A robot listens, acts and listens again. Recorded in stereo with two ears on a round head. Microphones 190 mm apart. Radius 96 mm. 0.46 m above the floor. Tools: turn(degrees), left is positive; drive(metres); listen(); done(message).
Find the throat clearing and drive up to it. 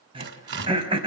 turn(degrees=-25)
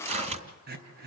turn(degrees=-125)
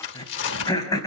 turn(degrees=20)
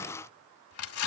listen()
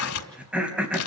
drive(metres=1.0)
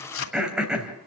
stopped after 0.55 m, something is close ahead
done("Something is in my way. I am facing the throat clearing but have not reached it.")